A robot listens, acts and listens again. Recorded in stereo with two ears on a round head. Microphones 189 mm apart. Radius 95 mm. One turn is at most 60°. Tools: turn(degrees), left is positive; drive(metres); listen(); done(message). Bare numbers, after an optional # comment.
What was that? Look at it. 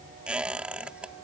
turn(-30)
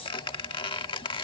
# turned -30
# So it is at 25° left.
turn(25)
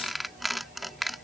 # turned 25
done("Facing the squeak.")